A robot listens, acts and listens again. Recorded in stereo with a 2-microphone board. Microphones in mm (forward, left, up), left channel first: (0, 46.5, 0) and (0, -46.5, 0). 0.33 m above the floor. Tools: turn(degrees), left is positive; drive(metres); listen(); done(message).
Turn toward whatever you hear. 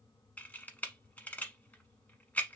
turn(degrees=20)
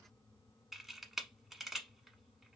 done("Facing the camera shutter, 1 to 2 m away.")